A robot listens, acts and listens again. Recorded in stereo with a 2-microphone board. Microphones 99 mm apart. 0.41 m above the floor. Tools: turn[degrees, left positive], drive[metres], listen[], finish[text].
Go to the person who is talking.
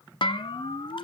Action: listen[]
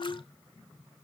Action: listen[]
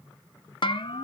Action: finish[I can't make out anyone speaking to turn to.]